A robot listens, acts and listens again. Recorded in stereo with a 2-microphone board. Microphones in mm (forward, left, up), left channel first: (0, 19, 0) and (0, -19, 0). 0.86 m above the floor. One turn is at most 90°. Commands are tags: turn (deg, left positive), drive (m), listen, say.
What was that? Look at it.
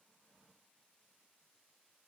<listen/>
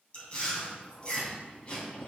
<turn deg="30"/>
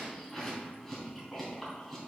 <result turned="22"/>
<turn deg="10"/>
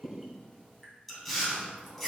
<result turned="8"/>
<say>Facing the chewing.</say>